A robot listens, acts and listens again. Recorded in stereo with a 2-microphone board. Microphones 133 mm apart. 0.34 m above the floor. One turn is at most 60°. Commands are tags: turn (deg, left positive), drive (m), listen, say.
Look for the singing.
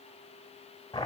<listen/>
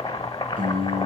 <turn deg="-60"/>
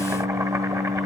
<turn deg="-60"/>
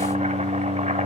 <turn deg="-40"/>
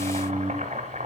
<turn deg="-15"/>
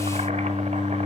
<say>Found it: singing, straight ahead, 2 to 4 m away.</say>